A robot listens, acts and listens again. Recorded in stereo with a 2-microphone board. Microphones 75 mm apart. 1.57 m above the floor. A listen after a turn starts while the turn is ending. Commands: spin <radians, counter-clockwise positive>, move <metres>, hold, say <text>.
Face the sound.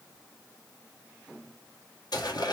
spin 1.13
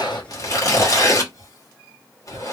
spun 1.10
spin 0.79
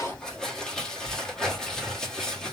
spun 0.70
say Found it: tearing paper, straight ahead, 1 to 2 m away.